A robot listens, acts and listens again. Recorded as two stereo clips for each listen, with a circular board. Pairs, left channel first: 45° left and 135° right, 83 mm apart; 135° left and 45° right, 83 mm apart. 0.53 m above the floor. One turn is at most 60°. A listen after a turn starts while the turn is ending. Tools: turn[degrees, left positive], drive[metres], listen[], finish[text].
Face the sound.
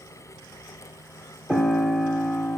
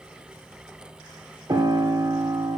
Thought: The piano: 50° right.
Action: turn[-50]
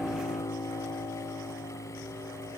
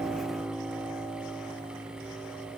Action: finish[Facing the piano, under 1 m away.]